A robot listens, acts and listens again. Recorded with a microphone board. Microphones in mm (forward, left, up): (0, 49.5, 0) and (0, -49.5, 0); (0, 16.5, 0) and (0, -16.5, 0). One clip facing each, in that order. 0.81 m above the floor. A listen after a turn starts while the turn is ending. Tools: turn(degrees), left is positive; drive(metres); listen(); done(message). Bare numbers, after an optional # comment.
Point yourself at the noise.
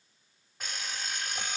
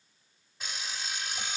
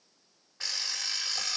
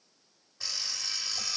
# The alarm clock: about 55° left or 125° left.
turn(55)
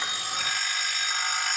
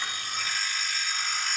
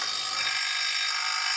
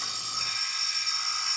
# So it is at 70° left.
turn(70)
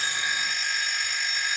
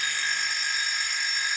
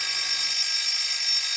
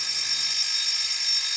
done("Facing the alarm clock.")